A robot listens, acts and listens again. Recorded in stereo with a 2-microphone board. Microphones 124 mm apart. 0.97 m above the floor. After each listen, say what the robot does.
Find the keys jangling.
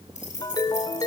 Turn 70° left.
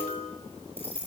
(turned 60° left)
Turn 50° left.
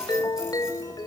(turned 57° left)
Turn 10° right.
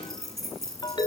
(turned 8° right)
Found it: keys jangling, straight ahead, over 4 m away.